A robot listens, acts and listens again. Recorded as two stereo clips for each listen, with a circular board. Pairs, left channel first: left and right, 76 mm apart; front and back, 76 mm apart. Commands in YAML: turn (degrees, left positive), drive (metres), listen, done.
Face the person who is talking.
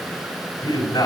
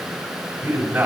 turn: 110
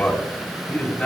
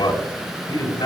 turn: 10
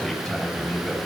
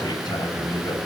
done: "Facing the man speaking, over 4 m away."